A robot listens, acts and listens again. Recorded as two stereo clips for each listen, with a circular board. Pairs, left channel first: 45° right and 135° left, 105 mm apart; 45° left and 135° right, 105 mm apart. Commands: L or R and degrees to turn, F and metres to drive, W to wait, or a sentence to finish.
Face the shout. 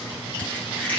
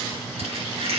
W
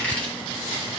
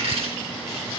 W
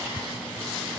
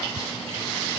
I can't make out a shout, only a squeak.